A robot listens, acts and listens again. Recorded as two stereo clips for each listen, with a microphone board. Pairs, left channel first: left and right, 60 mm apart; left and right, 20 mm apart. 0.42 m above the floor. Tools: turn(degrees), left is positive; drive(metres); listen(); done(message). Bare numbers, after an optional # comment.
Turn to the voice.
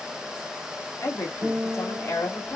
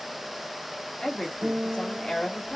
# The woman speaking: about 50° left or 130° left.
turn(50)
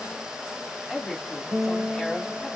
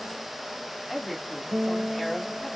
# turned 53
done("Facing the woman speaking.")